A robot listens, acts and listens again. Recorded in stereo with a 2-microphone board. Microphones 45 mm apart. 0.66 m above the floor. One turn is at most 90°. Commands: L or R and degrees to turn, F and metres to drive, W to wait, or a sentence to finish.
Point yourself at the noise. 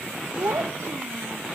R90
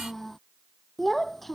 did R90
Facing the child speaking.